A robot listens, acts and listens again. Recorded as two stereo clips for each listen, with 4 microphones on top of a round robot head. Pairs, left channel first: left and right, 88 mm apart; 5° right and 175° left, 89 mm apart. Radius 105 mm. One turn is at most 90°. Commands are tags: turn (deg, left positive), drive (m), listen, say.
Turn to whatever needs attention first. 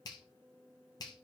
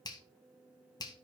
<listen/>
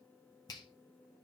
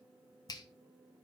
<listen/>
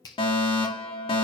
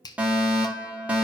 <turn deg="90"/>
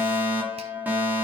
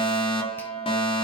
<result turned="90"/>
<turn deg="-15"/>
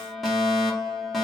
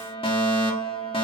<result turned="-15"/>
<say>Facing the fire alarm.</say>